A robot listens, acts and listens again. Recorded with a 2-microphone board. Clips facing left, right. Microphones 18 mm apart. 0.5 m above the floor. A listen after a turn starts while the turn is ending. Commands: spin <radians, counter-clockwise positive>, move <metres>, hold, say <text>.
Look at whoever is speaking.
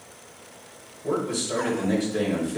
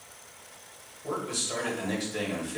spin -0.52
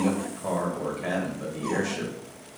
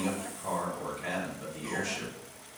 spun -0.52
spin 0.26
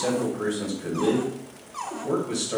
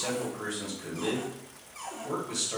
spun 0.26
say Facing the man speaking.